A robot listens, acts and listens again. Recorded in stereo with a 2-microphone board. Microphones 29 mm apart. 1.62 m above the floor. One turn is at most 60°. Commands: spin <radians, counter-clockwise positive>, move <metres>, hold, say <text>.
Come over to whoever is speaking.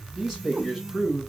spin -0.35
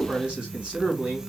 spin -1.05
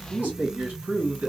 spin -1.05
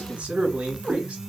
spin -0.79
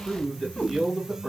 spin 0.17
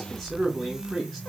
move 1.0
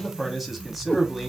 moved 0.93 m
move 1.0
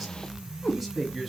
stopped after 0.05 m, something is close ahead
say Arrived at the man speaking, straight ahead.